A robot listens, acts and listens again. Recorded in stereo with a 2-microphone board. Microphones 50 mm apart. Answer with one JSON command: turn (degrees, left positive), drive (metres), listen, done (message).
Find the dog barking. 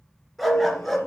{"turn": 30}
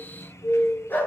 {"turn": 135}
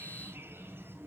{"listen": true}
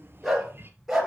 {"done": "Found it: a dog barking, straight ahead, 2 to 4 m away."}